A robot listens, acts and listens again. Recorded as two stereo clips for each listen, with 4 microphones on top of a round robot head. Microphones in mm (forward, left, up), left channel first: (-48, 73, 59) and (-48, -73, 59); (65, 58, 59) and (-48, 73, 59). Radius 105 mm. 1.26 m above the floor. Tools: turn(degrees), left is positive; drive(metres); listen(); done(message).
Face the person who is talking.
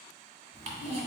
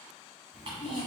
turn(degrees=15)
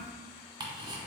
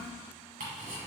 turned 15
done("Facing the child speaking, 1 to 2 m away.")